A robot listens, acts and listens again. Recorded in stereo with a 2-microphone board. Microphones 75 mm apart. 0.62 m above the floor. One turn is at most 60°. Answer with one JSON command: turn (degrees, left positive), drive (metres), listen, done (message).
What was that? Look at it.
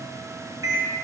{"turn": -55}
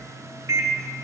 {"turn": -55}
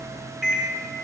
{"done": "Found it: a microwave, straight ahead, under 1 m away."}